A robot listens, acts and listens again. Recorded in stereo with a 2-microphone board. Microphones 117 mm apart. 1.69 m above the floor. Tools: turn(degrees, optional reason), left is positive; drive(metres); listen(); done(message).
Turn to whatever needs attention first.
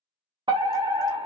turn(degrees=-45, reason="The fire alarm: about 45° right or 135° right.")
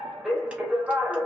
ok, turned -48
done("Facing the fire alarm.")